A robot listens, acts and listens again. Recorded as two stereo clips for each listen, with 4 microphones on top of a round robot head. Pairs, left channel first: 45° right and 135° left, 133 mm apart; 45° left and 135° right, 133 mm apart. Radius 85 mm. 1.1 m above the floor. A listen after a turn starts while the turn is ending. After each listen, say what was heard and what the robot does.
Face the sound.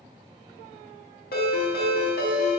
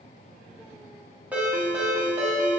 The ringtone: 60° right. Turn 60° right.
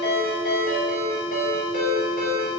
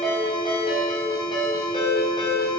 The ringtone is now 15° right. Turn 15° right.
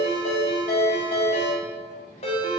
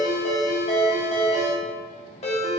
Found it: a ringtone, straight ahead, under 1 m away.